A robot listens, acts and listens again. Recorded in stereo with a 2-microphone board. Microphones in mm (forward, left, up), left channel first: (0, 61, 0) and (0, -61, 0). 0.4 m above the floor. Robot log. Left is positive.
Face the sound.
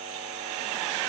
cmd idle
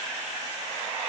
cmd idle
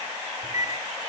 note: The microwave: about 65° left or 115° left.
cmd yaw +65
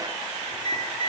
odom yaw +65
note: So it is at 45° left.
cmd yaw +45
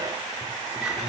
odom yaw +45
end: Facing the microwave.